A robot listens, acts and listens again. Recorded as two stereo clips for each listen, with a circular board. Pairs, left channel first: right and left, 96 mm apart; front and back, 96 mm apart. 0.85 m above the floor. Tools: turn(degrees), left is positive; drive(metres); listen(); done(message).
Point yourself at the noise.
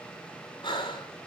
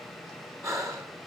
turn(degrees=-125)
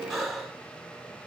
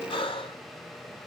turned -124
done("Found it: breathing, straight ahead, 2 to 4 m away.")